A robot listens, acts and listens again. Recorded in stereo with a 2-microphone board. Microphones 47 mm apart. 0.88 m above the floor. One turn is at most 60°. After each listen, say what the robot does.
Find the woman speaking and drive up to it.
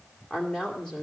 Turn 15° left.
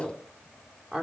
Drive 1.0 m forward.
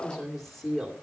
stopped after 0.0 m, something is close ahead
Something is in my way. I am facing the woman speaking but have not reached it.